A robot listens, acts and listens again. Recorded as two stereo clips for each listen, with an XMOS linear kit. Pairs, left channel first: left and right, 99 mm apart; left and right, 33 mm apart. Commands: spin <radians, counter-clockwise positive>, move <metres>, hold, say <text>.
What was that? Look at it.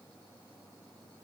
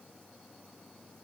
hold
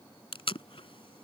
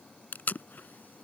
spin 1.05
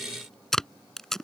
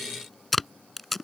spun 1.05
say Facing the tape being pulled.